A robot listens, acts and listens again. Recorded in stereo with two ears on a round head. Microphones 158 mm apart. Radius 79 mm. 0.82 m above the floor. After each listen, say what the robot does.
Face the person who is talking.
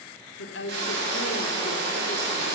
Turn 75° left.
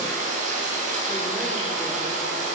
Keep listening.
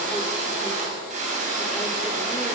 Keep listening.
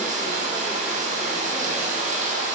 I heard a woman speaking, but can't make it out now. It was about straight ahead or 30° left.